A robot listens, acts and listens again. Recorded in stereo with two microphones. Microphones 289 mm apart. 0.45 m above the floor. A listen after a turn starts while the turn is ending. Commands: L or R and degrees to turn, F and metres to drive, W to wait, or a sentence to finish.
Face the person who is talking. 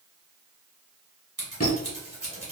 W
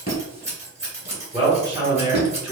L30
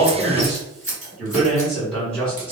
L30
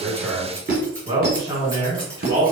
R20
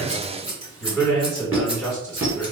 Found it: a man speaking, straight ahead, 1 to 2 m away.